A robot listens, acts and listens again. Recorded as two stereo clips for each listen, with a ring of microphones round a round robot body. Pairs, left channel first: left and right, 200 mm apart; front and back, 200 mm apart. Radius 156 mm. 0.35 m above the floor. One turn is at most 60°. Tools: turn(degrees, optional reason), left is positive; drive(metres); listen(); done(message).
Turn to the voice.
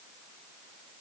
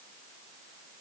listen()
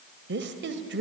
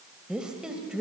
turn(degrees=-60, reason="The woman speaking: 95° right.")
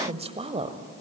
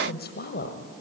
turn(degrees=-35, reason="The woman speaking is now 35° right.")
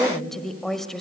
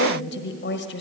done("Found it: a woman speaking, straight ahead.")